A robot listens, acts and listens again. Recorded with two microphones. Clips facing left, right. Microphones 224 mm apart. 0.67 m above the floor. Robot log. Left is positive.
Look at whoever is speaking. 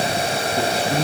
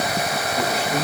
note: The man speaking: about 35° left or 145° left.
cmd yaw +35
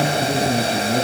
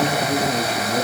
note: So it is at 110° left.
cmd yaw +110
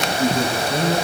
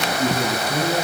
end: Found it: a man speaking, straight ahead.